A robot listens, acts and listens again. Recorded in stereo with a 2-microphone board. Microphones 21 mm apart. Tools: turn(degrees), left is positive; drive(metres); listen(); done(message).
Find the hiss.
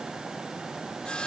listen()
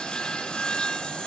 listen()
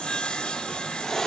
turn(degrees=15)
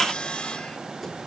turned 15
listen()
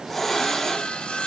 done("Found it: a hiss, straight ahead.")